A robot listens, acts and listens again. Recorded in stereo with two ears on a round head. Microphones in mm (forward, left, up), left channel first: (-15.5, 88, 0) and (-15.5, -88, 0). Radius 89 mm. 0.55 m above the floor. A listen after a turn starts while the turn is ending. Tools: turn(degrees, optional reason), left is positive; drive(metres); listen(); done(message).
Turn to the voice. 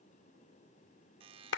listen()
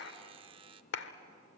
listen()
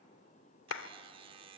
done("I can't make out anyone speaking to turn to.")